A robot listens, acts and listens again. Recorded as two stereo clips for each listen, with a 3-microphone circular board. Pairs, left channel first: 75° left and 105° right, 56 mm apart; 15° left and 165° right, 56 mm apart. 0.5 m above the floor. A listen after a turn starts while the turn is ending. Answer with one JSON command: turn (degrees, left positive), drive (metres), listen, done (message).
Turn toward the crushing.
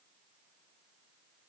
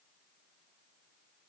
{"listen": true}
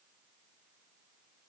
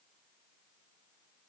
{"listen": true}
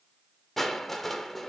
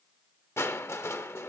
{"turn": -10}
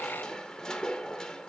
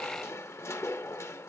{"done": "Facing the crushing, under 1 m away."}